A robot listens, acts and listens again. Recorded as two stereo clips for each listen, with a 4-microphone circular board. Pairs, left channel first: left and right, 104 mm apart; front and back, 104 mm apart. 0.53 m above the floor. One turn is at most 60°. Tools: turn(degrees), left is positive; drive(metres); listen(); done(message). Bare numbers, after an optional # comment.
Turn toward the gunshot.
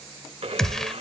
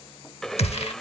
done("Found it: a gunshot, straight ahead.")